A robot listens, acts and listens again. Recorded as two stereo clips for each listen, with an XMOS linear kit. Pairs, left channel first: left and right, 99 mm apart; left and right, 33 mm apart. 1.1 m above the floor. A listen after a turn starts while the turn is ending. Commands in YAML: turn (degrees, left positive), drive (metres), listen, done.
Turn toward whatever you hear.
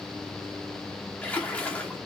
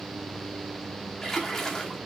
turn: 30
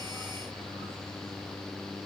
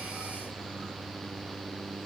listen: true
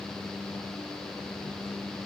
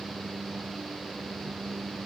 done: "I heard a splash, but can't make it out now. It was about 15° right or 135° left."